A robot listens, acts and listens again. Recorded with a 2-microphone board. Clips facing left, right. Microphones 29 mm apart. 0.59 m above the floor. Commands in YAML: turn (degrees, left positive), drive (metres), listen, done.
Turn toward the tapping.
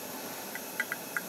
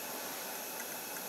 turn: 55
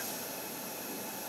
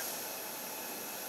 listen: true
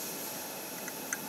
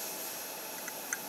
done: "Found it: tapping, straight ahead."